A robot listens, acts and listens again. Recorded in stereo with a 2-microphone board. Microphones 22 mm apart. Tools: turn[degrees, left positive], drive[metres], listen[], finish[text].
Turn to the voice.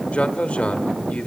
Thought: The man speaking: about 65° left or 115° left.
Action: turn[65]
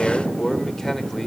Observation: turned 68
Thought: So it is at 20° left.
Action: turn[20]
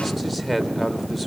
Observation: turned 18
Action: finish[Found it: a man speaking, straight ahead.]